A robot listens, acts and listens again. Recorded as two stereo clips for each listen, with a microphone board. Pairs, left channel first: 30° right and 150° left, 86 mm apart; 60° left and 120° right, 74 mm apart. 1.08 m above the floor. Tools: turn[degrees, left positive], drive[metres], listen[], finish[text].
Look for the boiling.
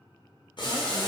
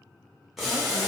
Thought: The boiling: 35° right.
Action: turn[-35]
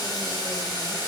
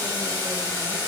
Action: finish[Facing the boiling, under 1 m away.]